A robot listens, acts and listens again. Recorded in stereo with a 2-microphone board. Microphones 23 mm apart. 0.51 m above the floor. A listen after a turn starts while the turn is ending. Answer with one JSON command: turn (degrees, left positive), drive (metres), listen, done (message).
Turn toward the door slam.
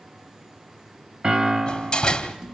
{"turn": 35}
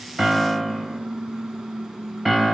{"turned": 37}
{"listen": true}
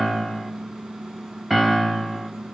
{"done": "I heard a door slam, but can't make it out now. It was about 5° right or 110° left."}